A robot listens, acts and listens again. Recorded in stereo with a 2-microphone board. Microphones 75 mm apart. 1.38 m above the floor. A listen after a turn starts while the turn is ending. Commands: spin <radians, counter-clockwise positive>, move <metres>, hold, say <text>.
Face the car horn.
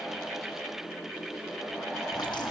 hold
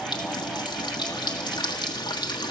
hold
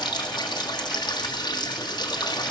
say I can't make out a car horn to turn to.